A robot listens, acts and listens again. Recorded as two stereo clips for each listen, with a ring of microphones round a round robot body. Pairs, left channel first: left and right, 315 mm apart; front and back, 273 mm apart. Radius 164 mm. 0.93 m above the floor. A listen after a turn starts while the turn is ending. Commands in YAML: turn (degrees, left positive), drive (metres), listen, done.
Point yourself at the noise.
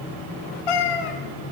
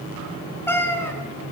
turn: 80
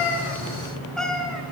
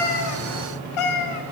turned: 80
done: "Found it: a cat meowing, straight ahead."